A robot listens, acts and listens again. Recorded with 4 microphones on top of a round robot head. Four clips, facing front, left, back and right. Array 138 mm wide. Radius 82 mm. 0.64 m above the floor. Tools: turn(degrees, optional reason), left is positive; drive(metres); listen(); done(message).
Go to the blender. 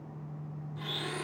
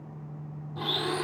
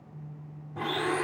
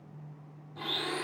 turn(degrees=155, reason="The blender: 155° left.")
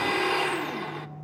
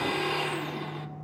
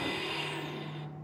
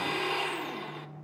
drive(metres=1.0)
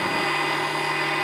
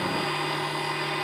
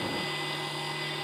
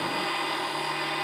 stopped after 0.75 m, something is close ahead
done("I am next to the blender.")